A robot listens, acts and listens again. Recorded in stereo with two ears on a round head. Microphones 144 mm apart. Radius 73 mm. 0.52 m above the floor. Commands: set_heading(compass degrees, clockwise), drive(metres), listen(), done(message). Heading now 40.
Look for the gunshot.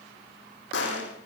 set_heading(310)
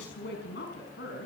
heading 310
done("Facing where the gunshot came from. I can't hear it now.")